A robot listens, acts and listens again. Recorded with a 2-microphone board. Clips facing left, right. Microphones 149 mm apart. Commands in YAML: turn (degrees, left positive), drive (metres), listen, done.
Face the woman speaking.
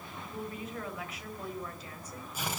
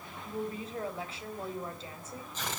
turn: -30
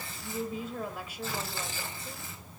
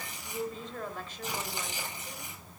turn: 10
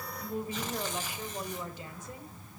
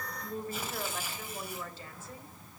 turn: 15
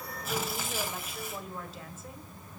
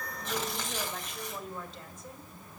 done: "Facing the woman speaking."